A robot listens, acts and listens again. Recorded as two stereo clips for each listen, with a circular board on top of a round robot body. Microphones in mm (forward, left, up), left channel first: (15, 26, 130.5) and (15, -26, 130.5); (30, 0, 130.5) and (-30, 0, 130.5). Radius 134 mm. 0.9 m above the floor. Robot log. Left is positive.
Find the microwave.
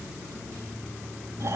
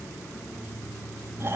cmd idle
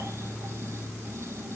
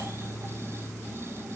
cmd idle
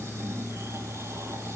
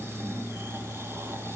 end: I can't make out a microwave, only snoring.